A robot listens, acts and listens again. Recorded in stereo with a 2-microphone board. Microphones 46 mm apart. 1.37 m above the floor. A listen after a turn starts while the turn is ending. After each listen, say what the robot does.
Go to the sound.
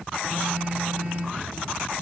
Turn 30° right.
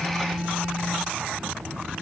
Drive 1.0 m forward.
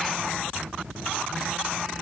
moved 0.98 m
Keep listening.
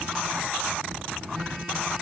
Keep listening.
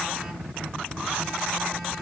Facing where the phone buzzing came from. I can't hear it now. I did not reach it.